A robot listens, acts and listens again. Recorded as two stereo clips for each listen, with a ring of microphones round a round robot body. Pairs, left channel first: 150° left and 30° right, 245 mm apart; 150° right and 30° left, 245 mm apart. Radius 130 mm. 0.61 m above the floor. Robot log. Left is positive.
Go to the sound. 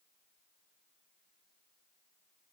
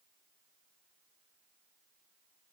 cmd idle
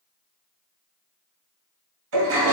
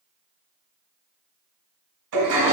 note: The toilet flushing: 10° left.
cmd yaw +10
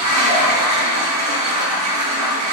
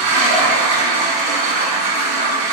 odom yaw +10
cmd fwd 1.0
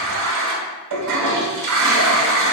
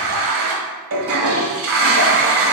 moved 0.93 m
note: The toilet flushing is now 10° right.
cmd yaw -10
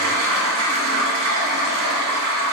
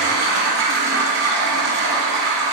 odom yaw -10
cmd fwd 1.0
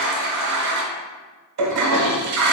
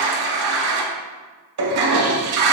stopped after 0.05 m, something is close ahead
end: I am next to the toilet flushing.